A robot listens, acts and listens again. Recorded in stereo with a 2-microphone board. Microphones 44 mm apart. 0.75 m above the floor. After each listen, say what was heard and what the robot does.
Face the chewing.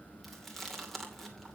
Turn 30° left.
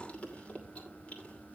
So it is at 150° left. Turn 150° left.
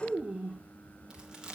The chewing is now 20° right. Turn 20° right.
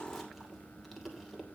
Keep listening.
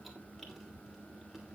Keep listening.
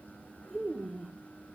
Facing the chewing, 2 to 4 m away.